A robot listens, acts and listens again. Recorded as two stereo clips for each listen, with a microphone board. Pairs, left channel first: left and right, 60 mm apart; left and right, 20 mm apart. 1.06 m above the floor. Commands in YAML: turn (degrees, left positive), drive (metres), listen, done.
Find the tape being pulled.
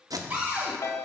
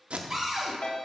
turn: -90
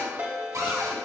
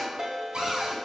listen: true
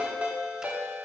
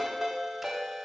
listen: true
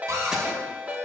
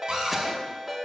done: "I heard tape being pulled from this way, but can't make it out now."